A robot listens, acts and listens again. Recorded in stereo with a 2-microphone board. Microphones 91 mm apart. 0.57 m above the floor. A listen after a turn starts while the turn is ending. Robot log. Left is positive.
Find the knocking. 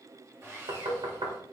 note: The knocking: about 65° right or 115° right.
cmd yaw -65
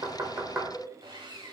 note: So it is at 25° right.
cmd yaw -25
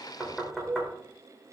end: Found it: knocking, straight ahead.